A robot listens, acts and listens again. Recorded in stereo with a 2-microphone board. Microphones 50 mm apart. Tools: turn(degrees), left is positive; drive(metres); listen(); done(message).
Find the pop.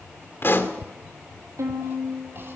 turn(degrees=50)
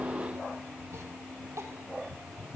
listen()
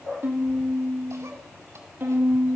done("I heard a pop, but can't make it out now. It was about straight ahead or 80° left.")